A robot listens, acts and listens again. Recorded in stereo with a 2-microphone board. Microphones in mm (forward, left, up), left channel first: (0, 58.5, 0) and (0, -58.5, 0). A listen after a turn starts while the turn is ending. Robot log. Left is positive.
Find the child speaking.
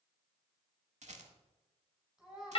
cmd yaw -30
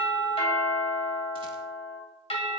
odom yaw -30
cmd idle
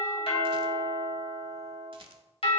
cmd idle
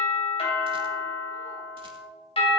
end: I heard a child speaking, but can't make it out now. It was about 25° left or 145° right.